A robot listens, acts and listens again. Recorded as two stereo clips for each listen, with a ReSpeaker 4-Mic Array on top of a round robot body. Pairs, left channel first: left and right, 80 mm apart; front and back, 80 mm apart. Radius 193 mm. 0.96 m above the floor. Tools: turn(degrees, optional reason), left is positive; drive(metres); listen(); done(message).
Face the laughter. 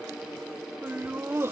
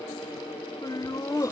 turn(degrees=-40, reason="The laughter: 40° right.")
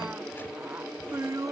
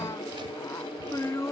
turn(degrees=-55, reason="The laughter is now 55° right.")
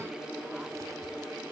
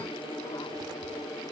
listen()
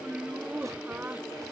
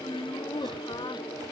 turn(degrees=-20, reason="The laughter is now 20° right.")
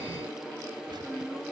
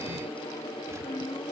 done("Facing the laughter.")